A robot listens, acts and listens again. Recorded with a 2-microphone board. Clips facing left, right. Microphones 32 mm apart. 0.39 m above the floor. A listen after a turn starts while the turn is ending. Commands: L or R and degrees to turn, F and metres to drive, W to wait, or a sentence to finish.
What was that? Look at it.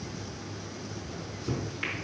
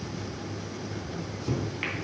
R15
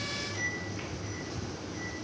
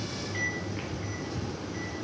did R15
R155
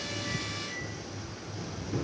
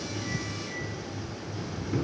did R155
R20
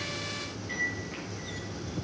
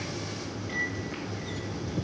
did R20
Found it: a microwave, straight ahead.